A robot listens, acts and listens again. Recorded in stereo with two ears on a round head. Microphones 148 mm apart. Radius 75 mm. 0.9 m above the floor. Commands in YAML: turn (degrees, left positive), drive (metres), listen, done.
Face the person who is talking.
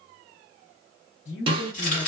turn: 70
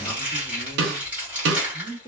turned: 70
turn: 25
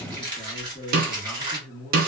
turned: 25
done: "Facing the man speaking."